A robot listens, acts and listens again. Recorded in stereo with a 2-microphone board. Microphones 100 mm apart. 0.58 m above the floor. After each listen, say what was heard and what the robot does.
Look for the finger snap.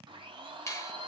The finger snap: about 30° left or 150° left. Turn 30° left.
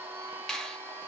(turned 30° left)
Facing the finger snap.